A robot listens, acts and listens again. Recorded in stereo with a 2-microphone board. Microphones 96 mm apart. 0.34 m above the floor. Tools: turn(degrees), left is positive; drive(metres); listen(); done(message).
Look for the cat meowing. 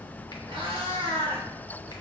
turn(degrees=-90)
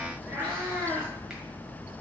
turn(degrees=-30)
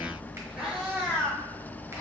turn(degrees=-15)
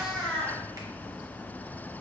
done("Facing the cat meowing.")